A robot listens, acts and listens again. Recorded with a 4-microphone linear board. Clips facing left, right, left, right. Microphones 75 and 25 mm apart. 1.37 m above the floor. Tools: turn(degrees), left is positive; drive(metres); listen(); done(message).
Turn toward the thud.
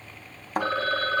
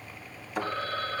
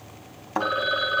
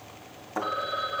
turn(degrees=50)
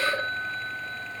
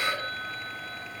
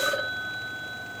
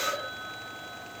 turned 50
listen()
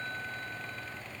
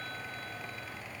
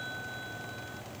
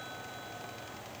done("I heard a thud, but can't make it out now. It was about straight ahead or 80° left.")